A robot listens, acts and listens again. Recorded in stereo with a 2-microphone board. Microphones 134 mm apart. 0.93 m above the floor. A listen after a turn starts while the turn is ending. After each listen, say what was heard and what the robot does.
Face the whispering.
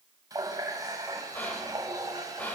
Turn 30° left.
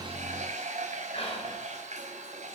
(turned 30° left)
Keep listening.
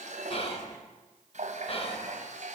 So it is at 135° left. Turn 135° left.
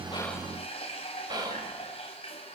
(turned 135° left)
The whispering is now 30° right. Turn 30° right.
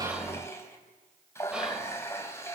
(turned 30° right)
Keep listening.
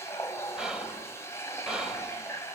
Found it: whispering, straight ahead.